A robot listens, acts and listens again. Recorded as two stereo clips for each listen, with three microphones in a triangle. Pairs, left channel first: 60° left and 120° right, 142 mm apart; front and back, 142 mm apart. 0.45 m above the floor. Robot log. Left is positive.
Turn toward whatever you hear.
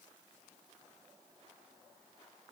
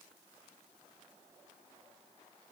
cmd idle
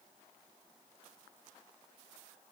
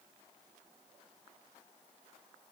cmd idle
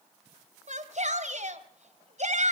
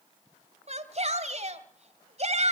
note: The shout: 145° right.
cmd yaw -145
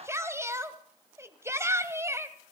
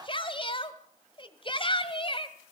note: The shout is now 50° right.
cmd yaw -50
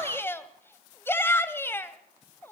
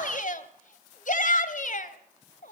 note: The shout is now 15° right.
cmd yaw -15
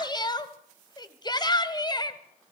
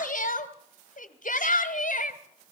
end: Facing the shout.